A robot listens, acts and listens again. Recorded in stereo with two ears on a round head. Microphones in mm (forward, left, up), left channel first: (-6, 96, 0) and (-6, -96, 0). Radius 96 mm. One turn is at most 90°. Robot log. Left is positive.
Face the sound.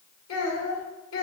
note: The child speaking: about 70° left or 110° left.
cmd yaw +70
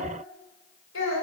note: So it is at 70° left.
cmd yaw +70
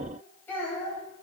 note: The child speaking is now 10° left.
cmd yaw +10
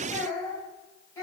note: The child speaking is now 15° left.
cmd yaw +15
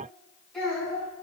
end: Facing the child speaking.